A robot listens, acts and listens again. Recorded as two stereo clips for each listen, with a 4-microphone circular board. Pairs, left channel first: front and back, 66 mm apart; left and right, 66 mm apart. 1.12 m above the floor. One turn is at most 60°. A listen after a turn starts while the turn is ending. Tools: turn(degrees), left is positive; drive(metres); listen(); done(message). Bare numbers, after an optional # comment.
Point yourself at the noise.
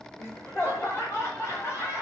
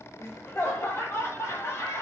# The laughter: 45° left.
turn(45)
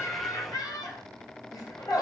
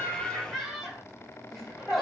done("Facing the laughter, 1 to 2 m away.")